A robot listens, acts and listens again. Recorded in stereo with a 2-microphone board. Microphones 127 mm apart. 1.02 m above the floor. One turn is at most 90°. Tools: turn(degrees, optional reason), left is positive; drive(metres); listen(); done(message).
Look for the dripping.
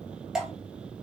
turn(degrees=-30)
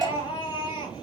turn(degrees=-90, reason="So it is at 145° right.")
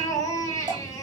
turn(degrees=-35, reason="The dripping is now 35° right.")
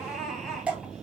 turn(degrees=-10, reason="The dripping is now 10° right.")
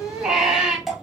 done("Facing the dripping.")